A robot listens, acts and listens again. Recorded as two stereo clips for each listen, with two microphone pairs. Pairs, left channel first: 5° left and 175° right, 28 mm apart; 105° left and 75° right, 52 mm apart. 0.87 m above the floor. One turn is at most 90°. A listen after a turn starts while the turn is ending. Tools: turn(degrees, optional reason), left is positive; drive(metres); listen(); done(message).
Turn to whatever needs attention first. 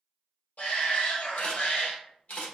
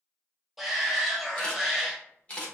done("Found it: a shout, straight ahead.")